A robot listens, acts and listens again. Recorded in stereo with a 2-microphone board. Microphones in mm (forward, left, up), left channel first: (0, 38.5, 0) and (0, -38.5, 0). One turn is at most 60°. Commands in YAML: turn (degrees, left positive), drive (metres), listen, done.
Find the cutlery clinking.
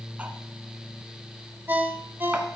turn: -20
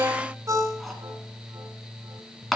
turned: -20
done: "Found it: cutlery clinking, straight ahead."